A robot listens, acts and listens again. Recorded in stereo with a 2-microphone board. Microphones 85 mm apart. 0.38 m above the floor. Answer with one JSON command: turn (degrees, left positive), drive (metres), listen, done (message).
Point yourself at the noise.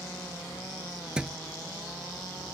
{"turn": -30}
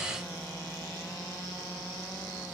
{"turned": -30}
{"listen": true}
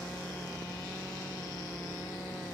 {"done": "I heard a thud, but can't make it out now. It was about 20° left or 140° right."}